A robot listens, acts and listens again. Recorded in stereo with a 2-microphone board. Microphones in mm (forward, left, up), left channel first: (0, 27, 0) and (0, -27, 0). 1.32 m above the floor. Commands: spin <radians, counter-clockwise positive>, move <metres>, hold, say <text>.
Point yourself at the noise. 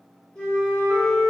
spin 0.52
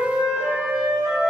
spin -0.26
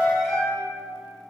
say Found it: a flute, straight ahead.